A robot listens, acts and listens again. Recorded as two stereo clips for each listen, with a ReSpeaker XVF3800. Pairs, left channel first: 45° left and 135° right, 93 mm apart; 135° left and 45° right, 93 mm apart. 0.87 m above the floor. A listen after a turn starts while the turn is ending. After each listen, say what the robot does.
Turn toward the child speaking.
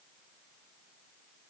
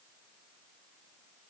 Keep listening.
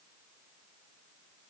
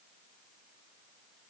Keep listening.
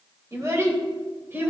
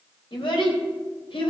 Turn 155° left.
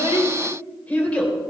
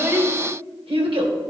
Turn 30° right.
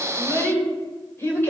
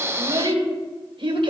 Turn 20° right.
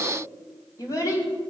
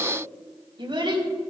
Facing the child speaking, 2 to 4 m away.